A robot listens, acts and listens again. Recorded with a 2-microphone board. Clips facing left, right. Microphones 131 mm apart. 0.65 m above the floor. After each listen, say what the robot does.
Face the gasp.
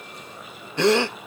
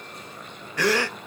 Turn 25° left.
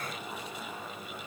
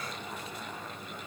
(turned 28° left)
Keep listening.
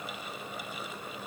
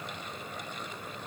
I heard a gasp, but can't make it out now. It was about 5° right or 130° left.